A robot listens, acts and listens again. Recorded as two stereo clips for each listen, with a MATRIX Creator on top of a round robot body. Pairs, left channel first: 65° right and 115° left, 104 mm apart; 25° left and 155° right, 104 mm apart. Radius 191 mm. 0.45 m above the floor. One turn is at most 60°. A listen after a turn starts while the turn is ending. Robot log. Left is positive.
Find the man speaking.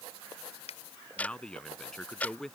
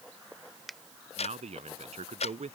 note: The man speaking: 155° right.
cmd yaw -60
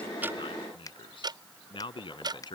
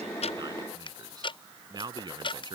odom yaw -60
note: The man speaking is now 110° right.
cmd yaw -60
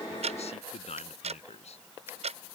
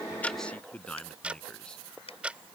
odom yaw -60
note: The man speaking is now 60° right.
cmd yaw -60
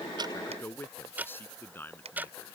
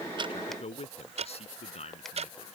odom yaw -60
end: Facing the man speaking.